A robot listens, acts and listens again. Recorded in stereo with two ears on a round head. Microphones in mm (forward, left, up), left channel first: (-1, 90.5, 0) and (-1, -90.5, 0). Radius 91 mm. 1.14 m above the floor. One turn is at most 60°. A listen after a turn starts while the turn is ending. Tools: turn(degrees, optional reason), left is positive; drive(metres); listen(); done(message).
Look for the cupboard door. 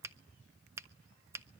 listen()
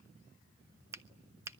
listen()
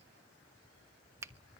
done("I can't make out a cupboard door to turn to.")